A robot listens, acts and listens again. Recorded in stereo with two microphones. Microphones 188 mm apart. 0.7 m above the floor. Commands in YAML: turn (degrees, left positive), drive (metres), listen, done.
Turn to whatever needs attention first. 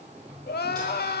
turn: 60
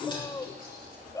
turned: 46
turn: 20
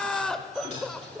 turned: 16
done: "Found it: crying, straight ahead."